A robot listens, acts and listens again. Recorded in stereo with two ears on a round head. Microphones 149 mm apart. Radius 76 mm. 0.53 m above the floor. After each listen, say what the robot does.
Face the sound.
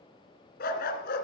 Turn 65° left.
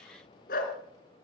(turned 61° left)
Turn 55° left.
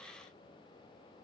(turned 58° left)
Keep listening.
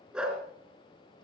Facing the dog barking.